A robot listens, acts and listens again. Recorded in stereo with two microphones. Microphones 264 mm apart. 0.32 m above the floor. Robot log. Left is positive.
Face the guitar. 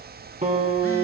note: The guitar: about 30° right or 150° right.
cmd yaw -30
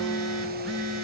end: Facing the guitar.